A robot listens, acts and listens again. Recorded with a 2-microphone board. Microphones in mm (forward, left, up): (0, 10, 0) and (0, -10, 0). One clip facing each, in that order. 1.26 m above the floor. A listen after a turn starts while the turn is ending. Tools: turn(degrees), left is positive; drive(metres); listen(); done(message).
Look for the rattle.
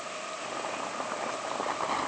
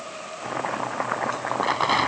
turn(degrees=-70)
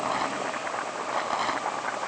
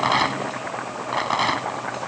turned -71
turn(degrees=-40)
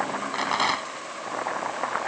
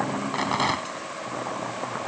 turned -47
done("Facing the rattle.")